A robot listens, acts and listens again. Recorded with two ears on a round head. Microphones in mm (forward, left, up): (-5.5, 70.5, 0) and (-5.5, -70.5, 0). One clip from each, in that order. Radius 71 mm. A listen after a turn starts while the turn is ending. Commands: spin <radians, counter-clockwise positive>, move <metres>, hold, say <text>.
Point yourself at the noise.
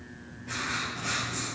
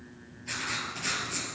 spin -1.05
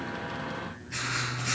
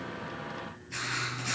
say Found it: writing, straight ahead.